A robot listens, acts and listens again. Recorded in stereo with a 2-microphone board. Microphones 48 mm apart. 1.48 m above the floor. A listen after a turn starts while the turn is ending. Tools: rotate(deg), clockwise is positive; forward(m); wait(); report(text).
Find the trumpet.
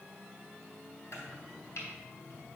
wait()
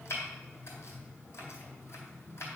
wait()
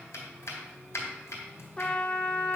rotate(-20)
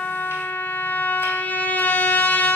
rotate(-140)
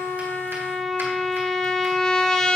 rotate(-15)
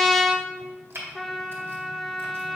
report("Facing the trumpet, under 1 m away.")